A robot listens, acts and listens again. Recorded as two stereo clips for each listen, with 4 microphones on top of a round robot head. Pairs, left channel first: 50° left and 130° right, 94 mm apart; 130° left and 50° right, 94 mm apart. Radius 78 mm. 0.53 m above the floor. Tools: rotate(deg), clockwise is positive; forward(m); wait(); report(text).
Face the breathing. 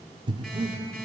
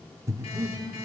rotate(105)
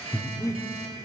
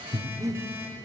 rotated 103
report("Facing the breathing, 1 to 2 m away.")